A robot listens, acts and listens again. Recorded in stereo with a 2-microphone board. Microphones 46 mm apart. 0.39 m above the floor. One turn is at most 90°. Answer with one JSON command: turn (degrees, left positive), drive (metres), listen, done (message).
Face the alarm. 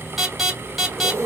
{"turn": -30}
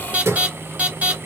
{"turn": -90}
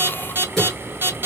{"turn": -65}
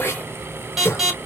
{"done": "Facing the alarm, 2 to 4 m away."}